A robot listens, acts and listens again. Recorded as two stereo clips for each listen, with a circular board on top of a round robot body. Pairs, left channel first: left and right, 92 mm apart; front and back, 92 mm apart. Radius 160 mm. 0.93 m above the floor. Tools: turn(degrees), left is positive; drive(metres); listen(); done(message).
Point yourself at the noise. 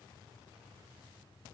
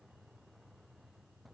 listen()
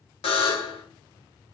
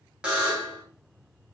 turn(degrees=100)
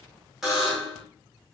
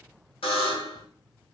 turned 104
done("Facing the buzzer, 2 to 4 m away.")